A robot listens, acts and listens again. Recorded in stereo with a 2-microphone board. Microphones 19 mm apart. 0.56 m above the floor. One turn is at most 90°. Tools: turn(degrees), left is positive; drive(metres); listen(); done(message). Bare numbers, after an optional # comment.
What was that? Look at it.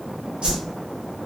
# The whoosh: about 55° right or 125° right.
turn(-55)
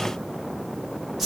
# So it is at 15° right.
turn(-15)
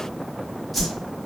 done("Found it: a whoosh, straight ahead, under 1 m away.")